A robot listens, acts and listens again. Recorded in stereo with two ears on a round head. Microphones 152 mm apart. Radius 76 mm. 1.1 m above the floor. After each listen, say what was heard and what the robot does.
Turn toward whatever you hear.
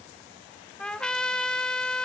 Turn 30° left.
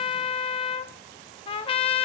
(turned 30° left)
So it is at 145° left. Turn 145° left.
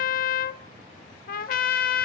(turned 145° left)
The trumpet is now 55° left. Turn 55° left.
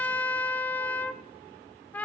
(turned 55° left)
The trumpet is now 10° left. Turn 10° left.
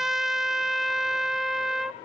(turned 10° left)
Found it: a trumpet, straight ahead.